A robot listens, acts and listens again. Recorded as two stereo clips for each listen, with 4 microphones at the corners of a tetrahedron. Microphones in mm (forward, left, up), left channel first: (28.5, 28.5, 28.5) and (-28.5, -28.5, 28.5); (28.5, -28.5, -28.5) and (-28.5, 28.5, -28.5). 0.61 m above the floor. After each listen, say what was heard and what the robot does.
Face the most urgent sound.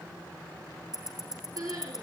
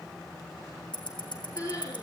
The crying: 95° right. Turn 95° right.
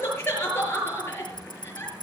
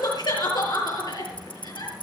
The crying is now 15° right. Turn 15° right.
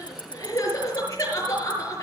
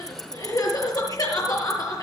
Facing the crying, over 4 m away.